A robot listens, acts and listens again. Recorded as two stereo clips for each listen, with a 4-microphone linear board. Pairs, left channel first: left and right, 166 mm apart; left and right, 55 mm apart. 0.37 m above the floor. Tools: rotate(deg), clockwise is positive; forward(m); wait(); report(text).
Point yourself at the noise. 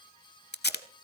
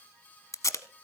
rotate(-90)
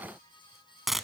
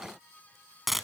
report("Found it: tape being pulled, straight ahead, 1 to 2 m away.")